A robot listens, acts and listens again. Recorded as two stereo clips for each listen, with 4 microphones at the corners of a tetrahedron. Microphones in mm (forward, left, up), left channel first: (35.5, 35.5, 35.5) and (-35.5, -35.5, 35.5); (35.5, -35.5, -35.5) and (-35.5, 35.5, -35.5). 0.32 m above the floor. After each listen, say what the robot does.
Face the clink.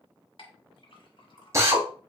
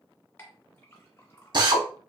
Turn 20° left.
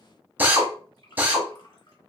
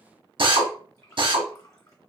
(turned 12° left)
Turn 10° left.
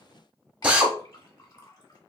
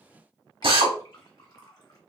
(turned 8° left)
Found it: a clink, straight ahead.